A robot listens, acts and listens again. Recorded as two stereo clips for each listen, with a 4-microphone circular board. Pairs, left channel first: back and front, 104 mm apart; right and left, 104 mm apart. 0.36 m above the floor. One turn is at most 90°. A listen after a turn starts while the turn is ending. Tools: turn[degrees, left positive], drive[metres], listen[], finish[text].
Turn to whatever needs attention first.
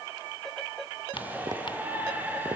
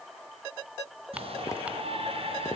Thought: The shout: 75° left.
Action: turn[75]
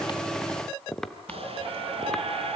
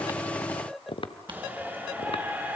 Thought: The shout is now 20° left.
Action: turn[20]
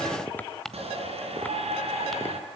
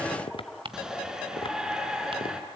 Action: finish[Facing the shout, over 4 m away.]